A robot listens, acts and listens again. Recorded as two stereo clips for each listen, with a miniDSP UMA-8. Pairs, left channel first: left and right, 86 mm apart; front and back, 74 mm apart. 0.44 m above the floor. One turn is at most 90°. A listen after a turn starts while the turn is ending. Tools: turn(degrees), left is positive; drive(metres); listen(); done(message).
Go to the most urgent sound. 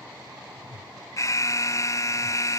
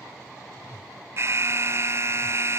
turn(degrees=90)
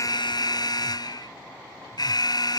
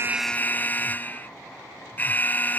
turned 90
turn(degrees=65)
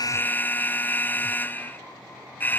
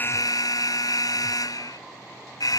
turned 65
turn(degrees=25)
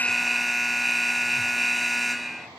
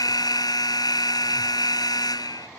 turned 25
drive(metres=1.0)
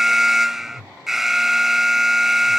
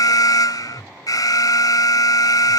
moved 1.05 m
drive(metres=1.0)
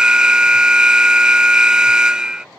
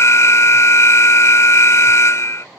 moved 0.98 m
turn(degrees=-15)
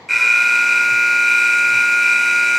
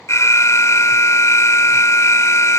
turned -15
drive(metres=1.0)
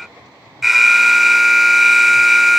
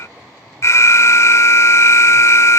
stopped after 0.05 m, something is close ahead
done("Arrived at the alarm, straight ahead.")